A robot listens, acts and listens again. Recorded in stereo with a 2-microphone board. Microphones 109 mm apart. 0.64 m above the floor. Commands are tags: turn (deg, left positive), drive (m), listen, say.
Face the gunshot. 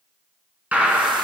<turn deg="-30"/>
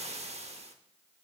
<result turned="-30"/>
<listen/>
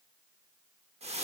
<say>I heard a gunshot, but can't make it out now. It was about 15° left or 135° right.</say>